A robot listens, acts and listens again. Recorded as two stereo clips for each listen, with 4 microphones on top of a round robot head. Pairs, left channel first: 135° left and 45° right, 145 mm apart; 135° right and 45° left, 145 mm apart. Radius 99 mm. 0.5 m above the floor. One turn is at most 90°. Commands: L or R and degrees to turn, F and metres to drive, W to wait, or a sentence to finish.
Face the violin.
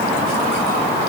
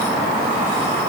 W
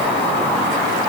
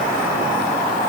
W
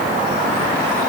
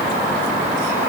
I can't make out a violin.